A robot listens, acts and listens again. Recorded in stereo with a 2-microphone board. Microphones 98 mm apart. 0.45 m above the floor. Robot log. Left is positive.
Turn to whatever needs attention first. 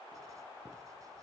cmd idle
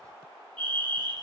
note: The fire alarm: about 60° right or 120° right.
cmd yaw -60
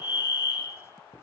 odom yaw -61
note: So it is at 30° right.
cmd yaw -30
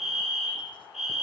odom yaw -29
end: Found it: a fire alarm, straight ahead.